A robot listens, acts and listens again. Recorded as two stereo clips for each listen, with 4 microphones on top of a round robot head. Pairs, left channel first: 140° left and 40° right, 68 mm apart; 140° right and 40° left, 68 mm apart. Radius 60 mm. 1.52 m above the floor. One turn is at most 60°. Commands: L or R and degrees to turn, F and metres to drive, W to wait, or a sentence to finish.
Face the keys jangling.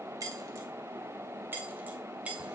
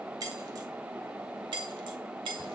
L35
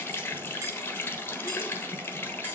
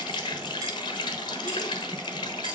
W
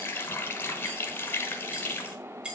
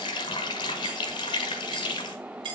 L30
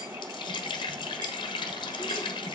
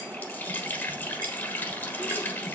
W
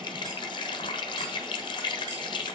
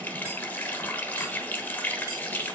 W
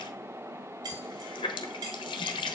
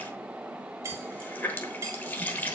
R15
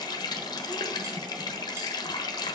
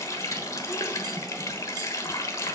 W
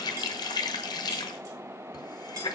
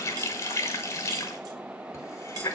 W
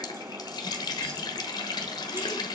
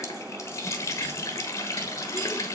Facing where the keys jangling came from. I can't hear it now.